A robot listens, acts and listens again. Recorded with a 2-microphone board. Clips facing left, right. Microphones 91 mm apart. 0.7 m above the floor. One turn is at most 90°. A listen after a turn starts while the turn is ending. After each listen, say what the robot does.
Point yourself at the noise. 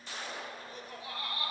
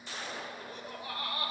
Turn 60° right.
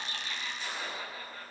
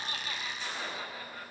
Keep listening.
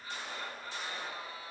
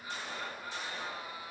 Turn 10° right.
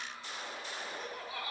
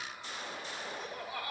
Facing the laughter.